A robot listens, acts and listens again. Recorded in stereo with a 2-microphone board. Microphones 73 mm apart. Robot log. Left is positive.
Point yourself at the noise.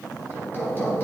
note: The hammering: about 30° left or 150° left.
cmd yaw +30
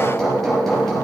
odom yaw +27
end: Found it: hammering, straight ahead, over 4 m away.